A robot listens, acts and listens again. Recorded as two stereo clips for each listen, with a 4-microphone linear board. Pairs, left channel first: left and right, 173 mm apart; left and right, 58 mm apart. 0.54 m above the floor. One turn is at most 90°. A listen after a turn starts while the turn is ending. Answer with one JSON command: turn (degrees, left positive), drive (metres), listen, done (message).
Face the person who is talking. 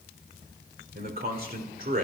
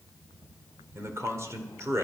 {"turn": -60}
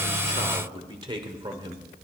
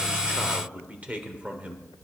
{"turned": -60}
{"turn": -35}
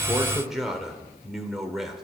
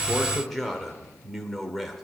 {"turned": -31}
{"done": "Facing the man speaking, 1 to 2 m away."}